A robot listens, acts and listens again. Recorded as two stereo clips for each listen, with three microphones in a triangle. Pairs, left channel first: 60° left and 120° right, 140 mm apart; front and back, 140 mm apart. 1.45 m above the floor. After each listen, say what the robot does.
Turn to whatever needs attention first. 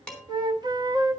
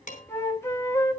Keep listening.
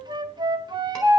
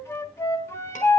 Keep listening.
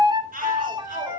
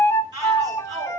Turn 120° right.
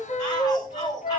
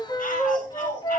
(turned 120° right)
Facing the shout, over 4 m away.